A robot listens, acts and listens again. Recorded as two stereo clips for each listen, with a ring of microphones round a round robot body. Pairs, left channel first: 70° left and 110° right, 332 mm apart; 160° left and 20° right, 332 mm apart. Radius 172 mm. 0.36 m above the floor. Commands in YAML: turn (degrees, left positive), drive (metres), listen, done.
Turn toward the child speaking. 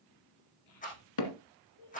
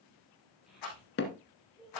turn: 70
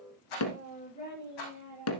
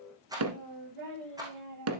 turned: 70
done: "Facing the child speaking, over 4 m away."